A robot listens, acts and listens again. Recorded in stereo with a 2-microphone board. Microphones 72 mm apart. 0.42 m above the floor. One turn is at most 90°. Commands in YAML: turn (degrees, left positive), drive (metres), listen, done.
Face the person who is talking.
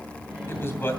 turn: 35
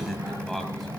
listen: true
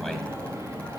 listen: true
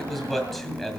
done: "Found it: a man speaking, straight ahead, 2 to 4 m away."